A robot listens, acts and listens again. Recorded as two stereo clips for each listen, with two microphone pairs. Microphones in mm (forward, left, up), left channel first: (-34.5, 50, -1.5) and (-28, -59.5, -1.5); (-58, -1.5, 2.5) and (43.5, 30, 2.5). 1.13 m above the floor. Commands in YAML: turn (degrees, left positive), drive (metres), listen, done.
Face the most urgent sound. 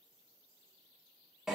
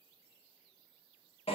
listen: true
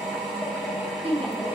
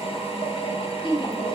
turn: -115
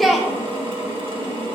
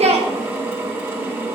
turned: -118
done: "Facing the shout."